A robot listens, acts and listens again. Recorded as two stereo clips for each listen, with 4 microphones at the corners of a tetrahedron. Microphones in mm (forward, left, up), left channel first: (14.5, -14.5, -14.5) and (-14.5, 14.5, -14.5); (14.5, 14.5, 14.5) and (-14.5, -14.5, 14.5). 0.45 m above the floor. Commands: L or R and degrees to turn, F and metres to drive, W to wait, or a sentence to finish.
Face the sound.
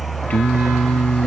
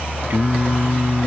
R100
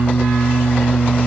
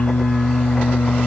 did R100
L10
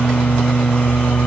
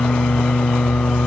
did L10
Facing the singing.